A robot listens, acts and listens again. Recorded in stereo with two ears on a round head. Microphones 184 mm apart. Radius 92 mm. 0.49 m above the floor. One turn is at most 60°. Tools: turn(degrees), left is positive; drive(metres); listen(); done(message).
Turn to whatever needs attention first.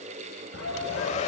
turn(degrees=60)
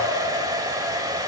listen()
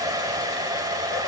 listen()
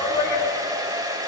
turn(degrees=15)
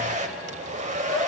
done("Found it: a shout, straight ahead.")